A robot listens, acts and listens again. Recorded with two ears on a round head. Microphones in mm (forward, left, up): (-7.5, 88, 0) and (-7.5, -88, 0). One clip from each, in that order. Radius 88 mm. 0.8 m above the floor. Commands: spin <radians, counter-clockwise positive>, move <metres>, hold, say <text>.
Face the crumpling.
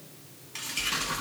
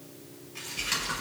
spin 1.05
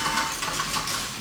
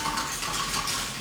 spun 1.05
hold
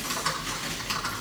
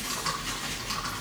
hold
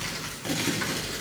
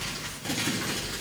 say Found it: crumpling, straight ahead.